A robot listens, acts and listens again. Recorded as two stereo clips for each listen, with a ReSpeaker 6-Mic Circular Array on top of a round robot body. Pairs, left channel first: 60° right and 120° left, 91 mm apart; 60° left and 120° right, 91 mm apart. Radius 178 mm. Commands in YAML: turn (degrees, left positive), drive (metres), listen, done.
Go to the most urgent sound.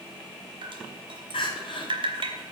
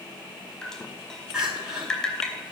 turn: -40
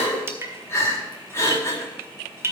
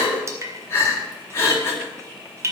drive: 1.0
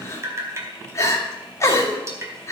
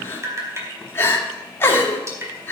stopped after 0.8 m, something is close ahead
done: "Something is in my way. I am facing the crying but have not reached it."